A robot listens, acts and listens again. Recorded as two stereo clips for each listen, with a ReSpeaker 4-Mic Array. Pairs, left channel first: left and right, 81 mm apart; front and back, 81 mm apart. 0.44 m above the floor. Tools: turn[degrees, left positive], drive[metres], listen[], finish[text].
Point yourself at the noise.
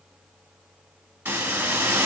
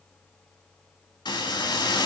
Thought: The hiss: 25° right.
Action: turn[-25]
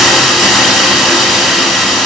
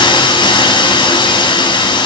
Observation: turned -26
Action: finish[Found it: a hiss, straight ahead, 1 to 2 m away.]